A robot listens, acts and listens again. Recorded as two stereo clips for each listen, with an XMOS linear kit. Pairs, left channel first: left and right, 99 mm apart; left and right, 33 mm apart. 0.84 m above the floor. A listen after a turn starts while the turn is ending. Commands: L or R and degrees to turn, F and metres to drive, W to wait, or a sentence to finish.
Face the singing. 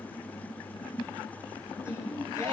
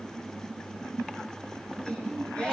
L30
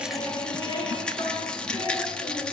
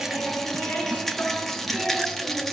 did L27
L125
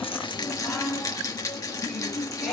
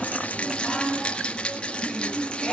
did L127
Found it: singing, straight ahead.